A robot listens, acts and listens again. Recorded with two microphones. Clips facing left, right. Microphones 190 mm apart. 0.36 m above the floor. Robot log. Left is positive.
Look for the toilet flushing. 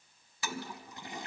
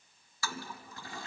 note: The toilet flushing: about 20° left or 160° left.
cmd yaw +20
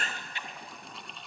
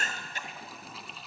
end: Found it: a toilet flushing, straight ahead, 1 to 2 m away.